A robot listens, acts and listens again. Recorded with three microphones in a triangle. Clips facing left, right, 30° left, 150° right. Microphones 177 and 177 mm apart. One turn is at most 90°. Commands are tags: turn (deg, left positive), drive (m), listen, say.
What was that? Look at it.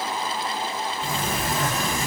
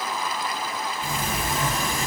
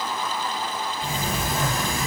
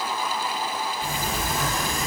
<turn deg="50"/>
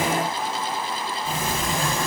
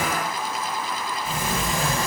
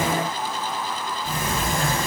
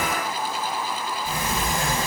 <say>Found it: a sliding door, straight ahead, 1 to 2 m away.</say>